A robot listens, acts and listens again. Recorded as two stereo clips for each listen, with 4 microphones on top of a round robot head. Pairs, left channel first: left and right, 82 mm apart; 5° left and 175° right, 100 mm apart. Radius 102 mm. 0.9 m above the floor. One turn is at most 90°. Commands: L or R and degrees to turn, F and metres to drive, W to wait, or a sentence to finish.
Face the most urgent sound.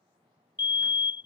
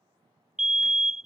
L90
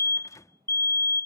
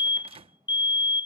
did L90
L40
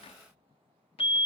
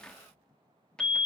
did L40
R25
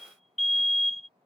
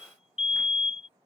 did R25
Facing the fire alarm.